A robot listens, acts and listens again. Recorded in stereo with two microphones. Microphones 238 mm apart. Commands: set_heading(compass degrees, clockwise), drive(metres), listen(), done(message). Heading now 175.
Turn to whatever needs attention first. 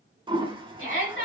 set_heading(125)
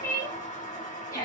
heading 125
set_heading(110)
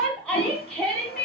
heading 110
done("Found it: a shout, straight ahead, 2 to 4 m away.")